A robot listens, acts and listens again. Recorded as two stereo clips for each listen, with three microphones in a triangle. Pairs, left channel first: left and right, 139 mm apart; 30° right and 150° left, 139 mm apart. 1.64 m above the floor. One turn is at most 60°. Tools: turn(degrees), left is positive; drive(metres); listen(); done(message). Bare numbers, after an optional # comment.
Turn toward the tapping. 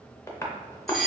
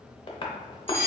# The tapping: 20° left.
turn(20)
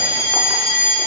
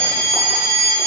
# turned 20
listen()
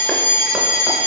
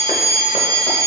listen()
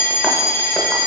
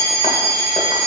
done("Facing where the tapping came from. I can't hear it now.")